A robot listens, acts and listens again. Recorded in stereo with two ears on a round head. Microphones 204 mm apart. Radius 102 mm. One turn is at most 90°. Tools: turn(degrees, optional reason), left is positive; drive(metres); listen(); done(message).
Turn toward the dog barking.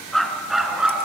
turn(degrees=-30)
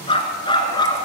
turn(degrees=20, reason="So it is at 20° left.")
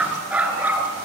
turn(degrees=-10, reason="The dog barking is now 10° right.")
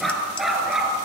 done("Found it: a dog barking, straight ahead, 2 to 4 m away.")